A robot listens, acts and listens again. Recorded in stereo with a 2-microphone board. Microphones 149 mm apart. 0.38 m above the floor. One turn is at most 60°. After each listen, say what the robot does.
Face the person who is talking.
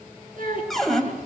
Turn 60° right.
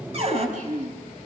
Turn 55° right.
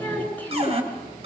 Turn 10° left.
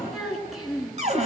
Found it: a child speaking, straight ahead, over 4 m away.